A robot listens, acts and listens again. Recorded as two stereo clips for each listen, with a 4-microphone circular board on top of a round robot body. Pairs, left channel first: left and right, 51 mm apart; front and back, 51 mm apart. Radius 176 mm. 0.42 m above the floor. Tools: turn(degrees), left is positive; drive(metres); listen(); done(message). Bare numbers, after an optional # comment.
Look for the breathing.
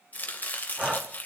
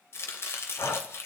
# The breathing: 15° right.
turn(-15)
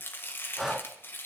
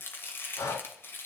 done("Facing the breathing, 1 to 2 m away.")